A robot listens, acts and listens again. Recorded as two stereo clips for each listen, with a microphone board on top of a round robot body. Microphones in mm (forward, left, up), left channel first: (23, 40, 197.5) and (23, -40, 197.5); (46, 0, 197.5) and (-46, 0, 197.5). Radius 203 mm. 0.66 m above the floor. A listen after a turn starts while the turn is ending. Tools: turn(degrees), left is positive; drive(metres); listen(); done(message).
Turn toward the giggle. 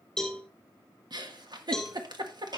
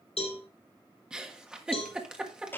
turn(degrees=-100)
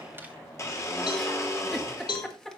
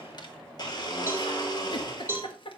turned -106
turn(degrees=10)
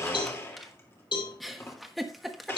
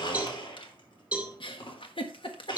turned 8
done("Facing the giggle.")